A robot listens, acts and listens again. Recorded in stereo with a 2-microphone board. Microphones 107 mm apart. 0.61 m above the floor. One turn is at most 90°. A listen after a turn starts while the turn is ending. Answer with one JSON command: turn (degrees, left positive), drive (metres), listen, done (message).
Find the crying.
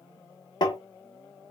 {"listen": true}
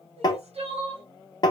{"turn": -90}
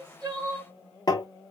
{"turn": -10}
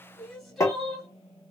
{"done": "Facing the crying."}